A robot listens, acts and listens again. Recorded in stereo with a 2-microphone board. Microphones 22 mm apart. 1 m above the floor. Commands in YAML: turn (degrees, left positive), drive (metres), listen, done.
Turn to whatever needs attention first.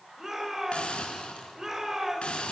turn: -20
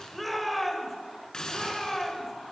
done: "Facing the shout, over 4 m away."